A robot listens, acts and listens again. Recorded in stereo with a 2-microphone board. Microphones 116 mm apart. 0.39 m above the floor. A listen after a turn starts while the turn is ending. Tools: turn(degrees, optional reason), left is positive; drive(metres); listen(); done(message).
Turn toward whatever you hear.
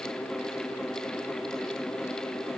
listen()
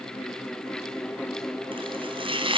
turn(degrees=-45, reason="The chopping: about 45° right or 135° right.")
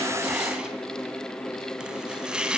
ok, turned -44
done("Facing the chopping, 2 to 4 m away.")